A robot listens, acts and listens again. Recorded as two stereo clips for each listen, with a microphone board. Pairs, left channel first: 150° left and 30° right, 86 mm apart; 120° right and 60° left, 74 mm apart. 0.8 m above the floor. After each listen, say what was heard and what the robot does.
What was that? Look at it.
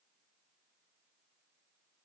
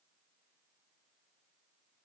Keep listening.
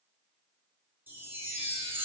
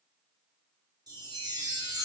The chime: 35° left. Turn 35° left.
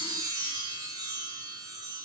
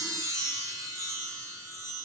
The chime is now 15° left. Turn 15° left.
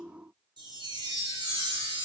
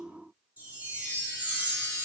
Found it: a chime, straight ahead, 1 to 2 m away.